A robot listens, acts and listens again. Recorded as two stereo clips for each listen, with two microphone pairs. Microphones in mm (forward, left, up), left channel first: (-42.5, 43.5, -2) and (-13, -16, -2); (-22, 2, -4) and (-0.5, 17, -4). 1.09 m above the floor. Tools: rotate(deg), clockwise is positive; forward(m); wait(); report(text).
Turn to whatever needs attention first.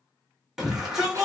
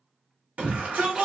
rotate(-20)
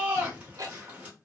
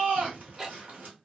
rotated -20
report("Found it: a shout, straight ahead.")